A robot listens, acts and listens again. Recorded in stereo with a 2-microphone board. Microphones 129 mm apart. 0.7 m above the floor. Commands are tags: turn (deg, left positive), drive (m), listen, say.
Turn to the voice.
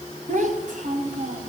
<turn deg="-90"/>
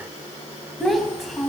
<say>Found it: a child speaking, straight ahead, 2 to 4 m away.</say>